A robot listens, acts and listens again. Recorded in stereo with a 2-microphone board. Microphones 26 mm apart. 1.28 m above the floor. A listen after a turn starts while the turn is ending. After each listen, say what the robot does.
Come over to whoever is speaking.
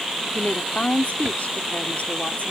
Turn 90° left.
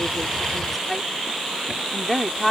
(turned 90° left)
Turn 10° left.
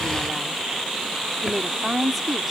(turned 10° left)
Drive 1.0 m forward.
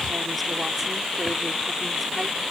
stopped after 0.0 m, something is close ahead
Keep listening.
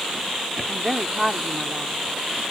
Blocked. The woman speaking is further on, straight ahead.